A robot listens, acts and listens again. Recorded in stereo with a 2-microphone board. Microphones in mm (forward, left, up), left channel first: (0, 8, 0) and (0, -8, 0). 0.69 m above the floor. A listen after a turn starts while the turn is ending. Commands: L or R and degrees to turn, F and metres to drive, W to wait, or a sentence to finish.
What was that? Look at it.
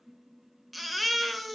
R30
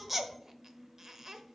W
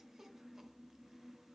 W
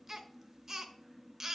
R150
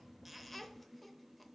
L10
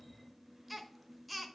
Facing the baby crying, under 1 m away.